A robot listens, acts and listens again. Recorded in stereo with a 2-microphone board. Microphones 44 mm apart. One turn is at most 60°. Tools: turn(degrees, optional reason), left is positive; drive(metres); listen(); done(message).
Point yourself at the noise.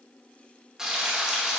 turn(degrees=-30)
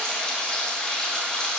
turn(degrees=15, reason="So it is at 15° left.")
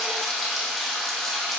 done("Found it: frying, straight ahead, 1 to 2 m away.")